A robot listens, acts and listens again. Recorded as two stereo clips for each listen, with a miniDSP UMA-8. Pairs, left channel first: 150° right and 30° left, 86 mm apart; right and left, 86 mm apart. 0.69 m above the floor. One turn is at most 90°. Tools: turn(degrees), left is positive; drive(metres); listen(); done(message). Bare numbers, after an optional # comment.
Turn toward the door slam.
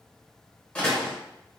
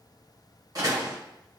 # The door slam: 135° left.
turn(90)
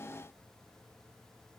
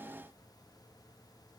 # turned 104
# Nothing new. It was at 30° left.
turn(30)
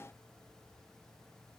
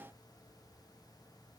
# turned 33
done("I heard a door slam from this way, but can't make it out now.")